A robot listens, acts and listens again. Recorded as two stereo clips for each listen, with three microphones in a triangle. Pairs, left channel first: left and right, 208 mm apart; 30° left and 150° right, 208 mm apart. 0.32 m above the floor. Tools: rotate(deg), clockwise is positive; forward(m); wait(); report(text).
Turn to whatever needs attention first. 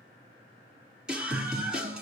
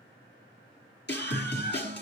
report("Facing the scream.")